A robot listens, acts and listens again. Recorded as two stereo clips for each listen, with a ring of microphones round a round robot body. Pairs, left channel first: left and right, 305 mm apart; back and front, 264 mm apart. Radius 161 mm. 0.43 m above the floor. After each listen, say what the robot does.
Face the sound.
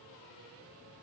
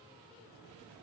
Keep listening.
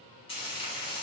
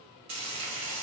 Turn 15° left.
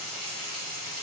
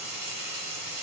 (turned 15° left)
Facing the frying.